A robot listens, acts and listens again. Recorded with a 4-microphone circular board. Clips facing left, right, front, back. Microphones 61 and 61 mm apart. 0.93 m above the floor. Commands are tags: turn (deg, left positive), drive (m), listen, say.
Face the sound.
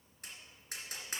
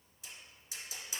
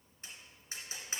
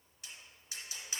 <turn deg="60"/>
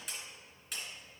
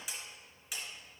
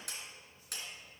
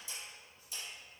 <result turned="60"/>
<say>Facing the tapping, 2 to 4 m away.</say>